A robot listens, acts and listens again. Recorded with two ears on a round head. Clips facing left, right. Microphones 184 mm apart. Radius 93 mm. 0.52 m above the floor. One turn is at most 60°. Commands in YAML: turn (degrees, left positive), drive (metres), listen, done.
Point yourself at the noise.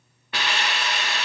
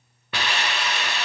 turn: -60
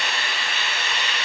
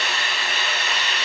turn: -35
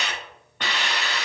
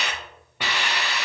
done: "Facing the hiss."